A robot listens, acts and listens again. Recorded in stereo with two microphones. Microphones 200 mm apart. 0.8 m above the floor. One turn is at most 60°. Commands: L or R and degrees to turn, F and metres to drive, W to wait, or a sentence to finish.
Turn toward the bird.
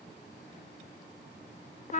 W
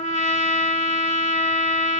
W
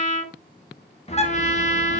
L35
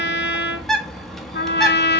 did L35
Found it: a bird, straight ahead, 1 to 2 m away.